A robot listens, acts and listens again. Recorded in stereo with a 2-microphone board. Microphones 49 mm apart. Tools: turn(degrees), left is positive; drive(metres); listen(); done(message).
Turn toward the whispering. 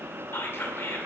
turn(degrees=55)
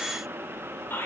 turn(degrees=60)
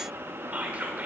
turn(degrees=-30)
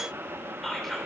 done("Facing the whispering.")